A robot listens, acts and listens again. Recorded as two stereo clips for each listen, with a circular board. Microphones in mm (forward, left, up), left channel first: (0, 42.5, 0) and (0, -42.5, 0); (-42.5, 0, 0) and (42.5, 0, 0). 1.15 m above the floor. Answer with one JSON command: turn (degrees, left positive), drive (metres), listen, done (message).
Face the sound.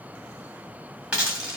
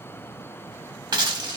{"turn": -15}
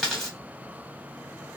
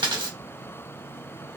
{"done": "Found it: a dropped coin, straight ahead."}